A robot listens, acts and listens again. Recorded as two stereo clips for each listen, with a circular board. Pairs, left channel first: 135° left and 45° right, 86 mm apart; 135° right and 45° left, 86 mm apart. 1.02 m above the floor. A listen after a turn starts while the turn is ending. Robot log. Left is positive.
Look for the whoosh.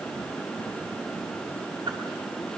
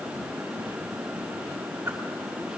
cmd idle
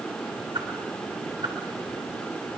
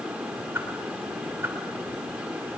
note: The whoosh: 20° right.
cmd yaw -20
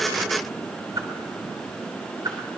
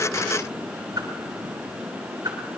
end: Facing the whoosh, 2 to 4 m away.